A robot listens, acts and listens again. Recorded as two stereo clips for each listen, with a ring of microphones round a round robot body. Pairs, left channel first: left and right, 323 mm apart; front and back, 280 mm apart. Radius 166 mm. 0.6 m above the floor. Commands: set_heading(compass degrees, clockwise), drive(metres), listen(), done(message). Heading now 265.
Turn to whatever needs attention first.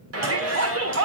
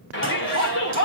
set_heading(315)
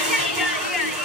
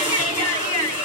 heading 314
done("Facing the shout, 2 to 4 m away.")